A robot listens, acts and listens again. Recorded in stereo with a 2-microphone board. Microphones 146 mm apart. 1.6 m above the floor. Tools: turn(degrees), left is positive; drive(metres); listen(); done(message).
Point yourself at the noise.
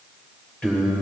turn(degrees=30)
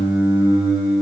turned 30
done("Found it: singing, straight ahead, 2 to 4 m away.")